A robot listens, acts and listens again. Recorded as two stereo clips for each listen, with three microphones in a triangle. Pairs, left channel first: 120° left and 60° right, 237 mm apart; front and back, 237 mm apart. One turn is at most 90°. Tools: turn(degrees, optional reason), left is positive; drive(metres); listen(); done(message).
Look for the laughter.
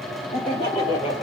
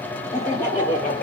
turn(degrees=55, reason="The laughter: 55° left.")
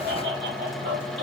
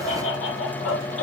turn(degrees=-25, reason="The laughter is now 25° right.")
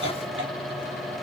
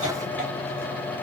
listen()
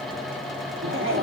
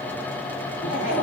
turn(degrees=-35, reason="The laughter is now 35° right.")
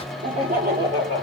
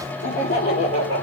turn(degrees=-15, reason="The laughter is now 15° right.")
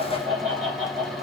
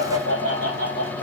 done("Found it: laughter, straight ahead.")